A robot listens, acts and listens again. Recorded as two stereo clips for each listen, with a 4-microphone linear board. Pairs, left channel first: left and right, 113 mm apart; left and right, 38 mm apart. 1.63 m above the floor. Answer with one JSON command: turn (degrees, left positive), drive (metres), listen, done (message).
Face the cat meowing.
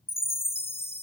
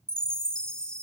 {"listen": true}
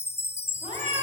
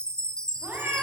{"turn": -90}
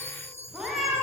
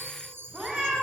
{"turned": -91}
{"done": "Found it: a cat meowing, straight ahead."}